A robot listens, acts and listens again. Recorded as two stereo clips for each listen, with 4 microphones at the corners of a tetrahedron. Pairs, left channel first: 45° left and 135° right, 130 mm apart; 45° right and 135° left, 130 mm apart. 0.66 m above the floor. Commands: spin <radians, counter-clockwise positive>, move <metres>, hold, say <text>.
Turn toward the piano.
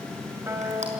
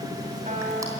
spin 2.71
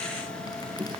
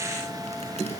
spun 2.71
hold
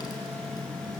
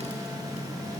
hold
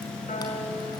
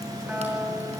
spin 1.05
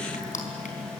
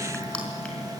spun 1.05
hold
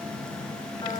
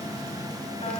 hold
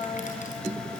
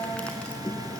spin -0.17
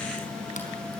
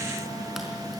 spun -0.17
hold
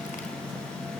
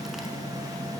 hold
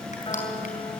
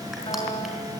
say Facing the piano, 2 to 4 m away.